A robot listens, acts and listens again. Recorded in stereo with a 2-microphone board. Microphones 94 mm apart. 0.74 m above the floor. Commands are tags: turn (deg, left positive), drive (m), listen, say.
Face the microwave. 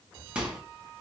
<turn deg="-30"/>
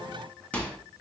<turn deg="15"/>
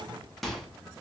<say>Facing the microwave.</say>